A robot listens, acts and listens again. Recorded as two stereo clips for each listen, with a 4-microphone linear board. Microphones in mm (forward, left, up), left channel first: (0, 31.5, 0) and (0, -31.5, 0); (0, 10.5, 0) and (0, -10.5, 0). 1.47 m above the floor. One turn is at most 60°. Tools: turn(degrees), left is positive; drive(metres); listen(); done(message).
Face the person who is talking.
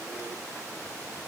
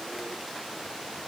listen()
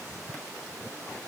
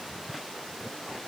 listen()
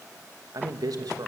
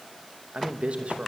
turn(degrees=-60)
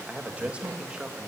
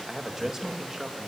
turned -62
turn(degrees=-15)
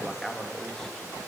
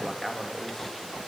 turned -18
done("Found it: a man speaking, straight ahead.")